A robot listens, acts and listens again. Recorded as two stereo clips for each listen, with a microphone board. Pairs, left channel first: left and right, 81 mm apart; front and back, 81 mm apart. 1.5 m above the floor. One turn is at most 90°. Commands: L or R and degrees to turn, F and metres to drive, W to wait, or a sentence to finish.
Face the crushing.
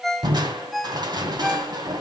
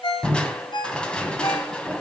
R75
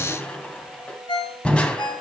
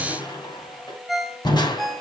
L15
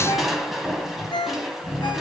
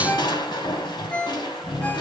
Found it: crushing, straight ahead, 2 to 4 m away.